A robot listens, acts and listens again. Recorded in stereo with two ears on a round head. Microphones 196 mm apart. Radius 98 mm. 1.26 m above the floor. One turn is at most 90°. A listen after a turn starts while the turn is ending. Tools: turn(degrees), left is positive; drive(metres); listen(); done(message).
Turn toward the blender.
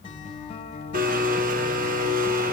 turn(degrees=-40)
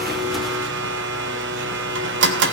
turn(degrees=-85)
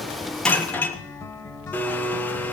turn(degrees=10)
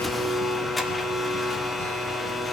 done("Facing the blender.")